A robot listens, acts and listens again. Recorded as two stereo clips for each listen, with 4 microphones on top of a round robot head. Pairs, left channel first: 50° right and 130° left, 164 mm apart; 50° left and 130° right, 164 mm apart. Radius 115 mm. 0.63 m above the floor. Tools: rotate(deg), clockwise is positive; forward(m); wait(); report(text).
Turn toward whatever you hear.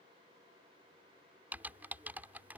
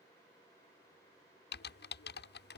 rotate(-50)
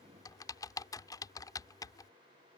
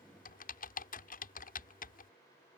rotate(-20)
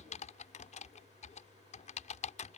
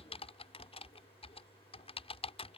report("Found it: typing on a keyboard, straight ahead.")